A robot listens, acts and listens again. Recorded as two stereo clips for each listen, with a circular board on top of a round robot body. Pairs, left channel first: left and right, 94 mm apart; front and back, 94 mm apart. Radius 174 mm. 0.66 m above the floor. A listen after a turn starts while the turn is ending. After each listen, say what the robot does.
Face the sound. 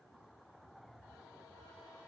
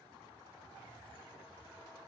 Keep listening.
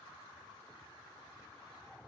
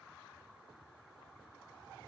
Keep listening.
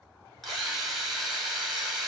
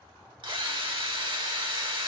Turn 180° left.
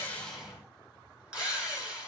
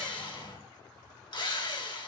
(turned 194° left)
Turn 15° right.
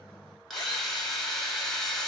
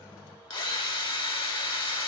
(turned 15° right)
Found it: a drill, straight ahead.